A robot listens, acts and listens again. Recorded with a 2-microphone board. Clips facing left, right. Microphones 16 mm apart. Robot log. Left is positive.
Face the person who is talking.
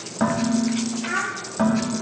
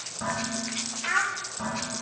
note: The child speaking: about 25° right or 155° right.
cmd yaw -25
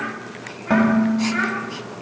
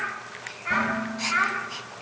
note: The child speaking: about 30° right or 150° right.
cmd yaw -30
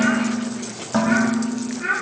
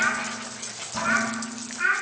note: So it is at 130° right.
cmd yaw -130
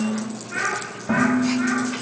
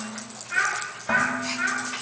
note: The child speaking is now 25° right.
cmd yaw -25
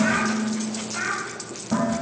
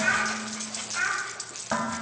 end: Facing the child speaking.